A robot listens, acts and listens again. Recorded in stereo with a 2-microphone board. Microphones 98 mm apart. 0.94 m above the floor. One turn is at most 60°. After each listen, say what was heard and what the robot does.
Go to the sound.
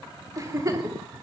The giggle: about 35° right or 145° right. Turn 35° right.
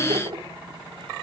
So it is at 110° right. Turn 60° right.
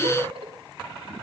The giggle is now 85° right. Turn 60° right.
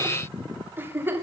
The giggle is now 25° right. Turn 25° right.
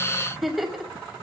Drive 1.0 m forward.
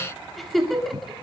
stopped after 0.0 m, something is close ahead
Blocked. The giggle is further on, straight ahead.